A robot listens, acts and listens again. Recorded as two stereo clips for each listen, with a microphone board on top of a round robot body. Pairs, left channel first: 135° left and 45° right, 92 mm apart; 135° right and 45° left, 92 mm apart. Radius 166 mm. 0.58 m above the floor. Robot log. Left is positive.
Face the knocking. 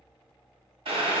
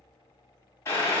cmd idle
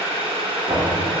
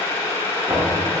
note: The knocking: 30° right.
cmd yaw -30
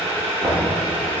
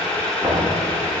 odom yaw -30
note: The knocking is now 10° right.
cmd yaw -10
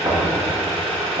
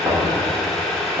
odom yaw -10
end: Found it: knocking, straight ahead, 2 to 4 m away.